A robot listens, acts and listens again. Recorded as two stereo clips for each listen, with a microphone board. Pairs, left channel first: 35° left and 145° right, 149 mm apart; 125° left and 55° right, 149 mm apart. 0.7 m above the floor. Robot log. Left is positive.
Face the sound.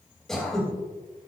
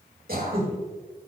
note: The throat clearing: 55° right.
cmd yaw -55
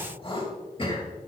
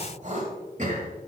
note: The throat clearing is now 20° right.
cmd yaw -20
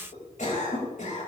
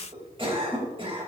end: Found it: throat clearing, straight ahead.